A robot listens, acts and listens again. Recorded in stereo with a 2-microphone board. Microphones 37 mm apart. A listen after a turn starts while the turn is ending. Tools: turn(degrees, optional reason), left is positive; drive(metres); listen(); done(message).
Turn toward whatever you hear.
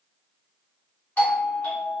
turn(degrees=65, reason="The doorbell: about 65° left or 115° left.")
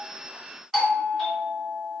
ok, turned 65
done("Found it: a doorbell, straight ahead, 2 to 4 m away.")